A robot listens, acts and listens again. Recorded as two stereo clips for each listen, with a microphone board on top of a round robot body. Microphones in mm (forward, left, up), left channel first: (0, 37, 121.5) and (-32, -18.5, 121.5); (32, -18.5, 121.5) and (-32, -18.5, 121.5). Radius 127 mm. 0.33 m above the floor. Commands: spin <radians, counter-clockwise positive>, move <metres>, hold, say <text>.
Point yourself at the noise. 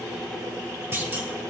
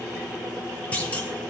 spin -1.13
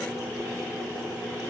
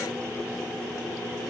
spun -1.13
say I heard a clunk from this way, but can't make it out now.